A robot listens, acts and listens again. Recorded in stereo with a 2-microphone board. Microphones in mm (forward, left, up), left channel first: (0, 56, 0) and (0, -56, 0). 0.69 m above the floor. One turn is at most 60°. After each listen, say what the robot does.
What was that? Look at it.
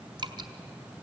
Turn 40° right.
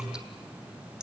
Found it: dripping, straight ahead.